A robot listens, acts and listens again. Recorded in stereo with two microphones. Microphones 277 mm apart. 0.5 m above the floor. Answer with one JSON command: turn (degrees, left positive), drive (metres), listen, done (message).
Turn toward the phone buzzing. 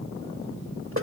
{"listen": true}
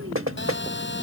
{"turn": 40}
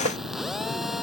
{"done": "Facing the phone buzzing."}